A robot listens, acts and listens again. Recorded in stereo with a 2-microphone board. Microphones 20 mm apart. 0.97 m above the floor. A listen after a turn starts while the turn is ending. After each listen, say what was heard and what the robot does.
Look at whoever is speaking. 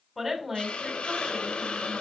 Turn 30° right.
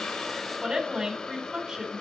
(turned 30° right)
So it is at 145° right. Turn 145° right.
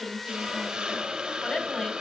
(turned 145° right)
The woman speaking is now 35° left. Turn 35° left.
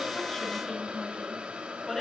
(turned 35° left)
The woman speaking is now 10° left. Turn 10° left.
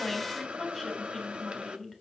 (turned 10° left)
Facing the woman speaking, 2 to 4 m away.